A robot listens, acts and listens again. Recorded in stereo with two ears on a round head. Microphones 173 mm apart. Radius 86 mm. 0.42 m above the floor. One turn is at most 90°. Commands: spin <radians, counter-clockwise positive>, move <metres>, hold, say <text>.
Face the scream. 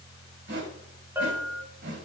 hold
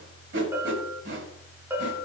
hold
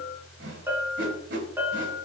say I can't make out a scream to turn to.